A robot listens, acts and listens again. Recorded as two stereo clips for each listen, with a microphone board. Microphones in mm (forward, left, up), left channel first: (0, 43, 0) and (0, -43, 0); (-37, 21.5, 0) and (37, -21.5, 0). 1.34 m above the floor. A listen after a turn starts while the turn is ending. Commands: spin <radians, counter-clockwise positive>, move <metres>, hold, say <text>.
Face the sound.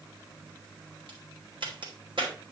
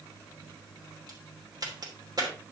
spin -1.22
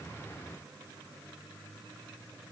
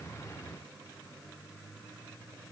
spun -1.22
say I heard a crack from this way, but can't make it out now.